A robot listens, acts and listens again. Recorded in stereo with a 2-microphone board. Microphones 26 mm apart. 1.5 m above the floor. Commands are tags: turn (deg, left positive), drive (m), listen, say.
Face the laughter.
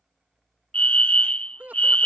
<turn deg="-90"/>
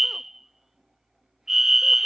<listen/>
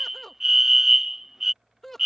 <say>Found it: laughter, straight ahead.</say>